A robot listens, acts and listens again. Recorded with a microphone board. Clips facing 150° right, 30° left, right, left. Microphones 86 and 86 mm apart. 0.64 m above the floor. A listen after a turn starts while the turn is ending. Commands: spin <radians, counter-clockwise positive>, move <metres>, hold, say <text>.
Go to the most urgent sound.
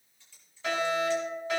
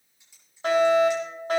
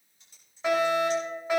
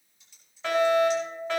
spin -0.17
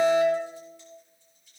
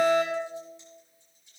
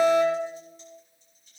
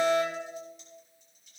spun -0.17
move 1.0
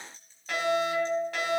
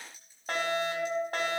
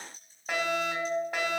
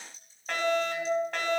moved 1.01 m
spin -0.17
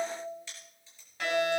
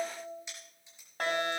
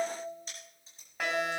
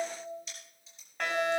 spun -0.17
move 1.0
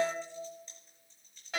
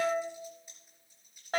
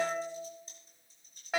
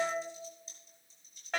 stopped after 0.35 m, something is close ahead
spin -0.17
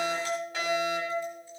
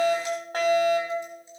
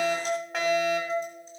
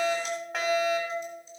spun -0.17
say Something is in my way. I am facing the fire alarm but have not reached it.